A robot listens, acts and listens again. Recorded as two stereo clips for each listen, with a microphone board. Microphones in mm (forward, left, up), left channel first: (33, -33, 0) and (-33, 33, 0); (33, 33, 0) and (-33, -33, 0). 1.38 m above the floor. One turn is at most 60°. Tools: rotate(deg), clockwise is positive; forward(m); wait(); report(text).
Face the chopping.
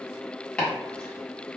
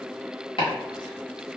rotate(-35)
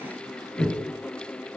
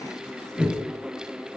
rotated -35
report("Found it: chopping, straight ahead, 1 to 2 m away.")